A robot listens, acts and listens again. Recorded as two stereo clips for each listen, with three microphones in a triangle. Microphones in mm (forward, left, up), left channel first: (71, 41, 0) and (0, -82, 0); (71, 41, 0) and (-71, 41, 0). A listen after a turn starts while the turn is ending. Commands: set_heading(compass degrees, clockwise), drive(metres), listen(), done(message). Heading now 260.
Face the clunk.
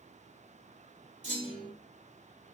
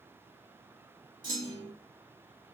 set_heading(30)
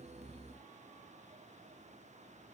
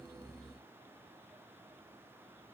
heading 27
done("Facing where the clunk came from. I can't hear it now.")